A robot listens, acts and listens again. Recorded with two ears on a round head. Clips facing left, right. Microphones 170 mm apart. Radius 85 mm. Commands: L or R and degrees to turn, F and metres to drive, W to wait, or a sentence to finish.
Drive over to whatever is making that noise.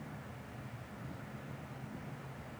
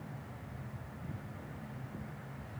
W
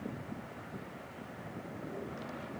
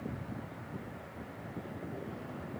W
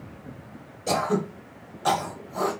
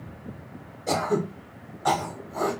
L35
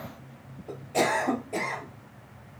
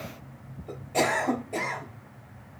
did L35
F1.0
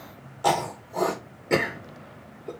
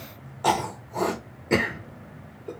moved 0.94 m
F1.0
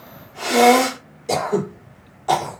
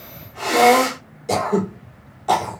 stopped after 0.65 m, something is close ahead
I am next to the throat clearing.